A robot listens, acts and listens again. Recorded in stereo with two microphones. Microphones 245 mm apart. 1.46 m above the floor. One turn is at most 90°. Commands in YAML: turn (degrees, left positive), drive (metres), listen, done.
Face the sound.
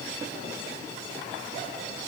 listen: true
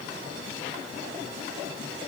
listen: true
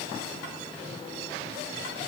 done: "I can't make out anything to turn to."